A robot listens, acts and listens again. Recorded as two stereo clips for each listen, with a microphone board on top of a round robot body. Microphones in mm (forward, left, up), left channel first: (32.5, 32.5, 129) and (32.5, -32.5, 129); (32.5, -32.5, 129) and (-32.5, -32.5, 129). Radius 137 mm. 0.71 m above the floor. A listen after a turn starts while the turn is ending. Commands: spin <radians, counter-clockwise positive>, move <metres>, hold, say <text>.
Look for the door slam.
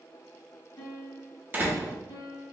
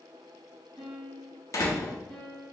spin -0.61
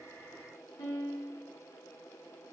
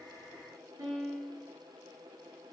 say Facing where the door slam came from. I can't hear it now.